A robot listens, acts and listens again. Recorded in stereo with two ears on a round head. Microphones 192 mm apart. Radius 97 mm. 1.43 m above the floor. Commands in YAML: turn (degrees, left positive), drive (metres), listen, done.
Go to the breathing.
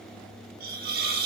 listen: true
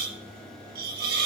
listen: true
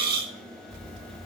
turn: 40
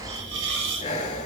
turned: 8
turn: 35
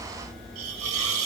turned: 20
turn: 15
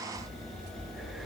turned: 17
drive: 1.0
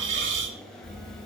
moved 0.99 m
drive: 1.0
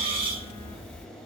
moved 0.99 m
turn: 10
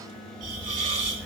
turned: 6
drive: 1.0
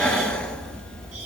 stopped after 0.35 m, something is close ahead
done: "Arrived at the breathing, straight ahead."